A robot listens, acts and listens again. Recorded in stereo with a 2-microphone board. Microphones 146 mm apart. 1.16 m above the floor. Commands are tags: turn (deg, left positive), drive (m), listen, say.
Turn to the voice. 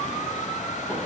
<listen/>
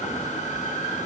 <listen/>
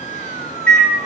<say>I can't make out anyone speaking to turn to.</say>